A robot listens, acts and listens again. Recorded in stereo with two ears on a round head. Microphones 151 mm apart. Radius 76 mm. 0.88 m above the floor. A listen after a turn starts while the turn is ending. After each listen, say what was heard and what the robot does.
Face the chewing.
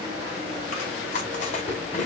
The chewing: about 45° left or 135° left. Turn 45° left.
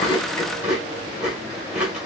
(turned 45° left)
Facing the chewing.